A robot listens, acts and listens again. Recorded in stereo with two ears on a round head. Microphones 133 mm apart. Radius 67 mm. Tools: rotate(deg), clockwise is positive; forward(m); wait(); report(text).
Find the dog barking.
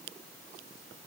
wait()
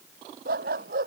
rotate(65)
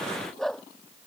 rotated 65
report("Found it: a dog barking, straight ahead.")